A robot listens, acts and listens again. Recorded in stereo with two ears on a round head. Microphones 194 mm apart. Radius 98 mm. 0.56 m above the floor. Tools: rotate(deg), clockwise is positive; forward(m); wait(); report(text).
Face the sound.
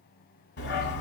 rotate(-50)
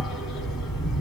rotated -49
report("Facing the dog barking, 1 to 2 m away.")